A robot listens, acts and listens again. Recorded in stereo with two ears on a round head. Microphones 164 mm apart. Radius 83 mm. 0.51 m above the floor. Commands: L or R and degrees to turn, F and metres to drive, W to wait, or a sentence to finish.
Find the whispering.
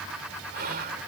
R50
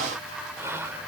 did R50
R15
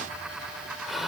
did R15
Found it: whispering, straight ahead.